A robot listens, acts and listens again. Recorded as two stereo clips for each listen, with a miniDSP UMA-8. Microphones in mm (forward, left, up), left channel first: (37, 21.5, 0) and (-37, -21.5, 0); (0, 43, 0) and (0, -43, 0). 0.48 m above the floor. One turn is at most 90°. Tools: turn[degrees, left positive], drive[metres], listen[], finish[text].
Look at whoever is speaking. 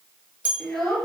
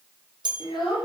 Thought: The child speaking: 115° left.
Action: turn[90]
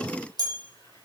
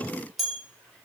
Thought: Nothing new. It was at 25° left.
Action: turn[25]
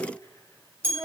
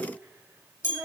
Thought: The child speaking is now 20° right.
Action: turn[-20]
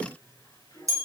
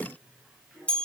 Action: listen[]
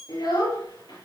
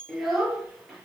Action: finish[Facing the child speaking.]